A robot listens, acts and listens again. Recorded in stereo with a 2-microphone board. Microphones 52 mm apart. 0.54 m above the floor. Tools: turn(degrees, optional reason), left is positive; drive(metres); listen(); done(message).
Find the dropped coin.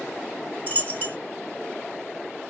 turn(degrees=35, reason="The dropped coin: about 35° left or 145° left.")
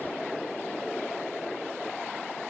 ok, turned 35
listen()
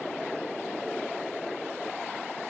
done("I heard a dropped coin, but can't make it out now. It was about straight ahead or 110° left.")